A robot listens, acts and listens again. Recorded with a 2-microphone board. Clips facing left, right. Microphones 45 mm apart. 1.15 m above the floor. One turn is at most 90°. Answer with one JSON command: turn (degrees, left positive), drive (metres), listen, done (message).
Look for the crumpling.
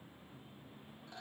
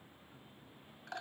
{"listen": true}
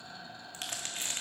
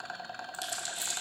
{"turn": 45}
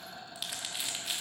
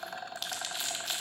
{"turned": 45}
{"done": "Found it: crumpling, straight ahead, 1 to 2 m away."}